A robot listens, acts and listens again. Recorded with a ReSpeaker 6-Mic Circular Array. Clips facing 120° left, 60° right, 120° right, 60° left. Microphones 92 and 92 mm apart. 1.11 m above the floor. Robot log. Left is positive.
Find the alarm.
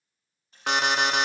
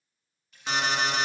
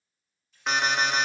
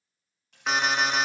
note: The alarm: 150° left.
cmd yaw +150
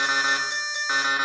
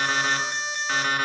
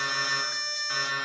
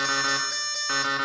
note: The alarm is now 50° left.
cmd yaw +50
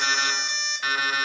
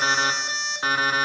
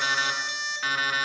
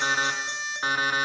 end: Facing the alarm.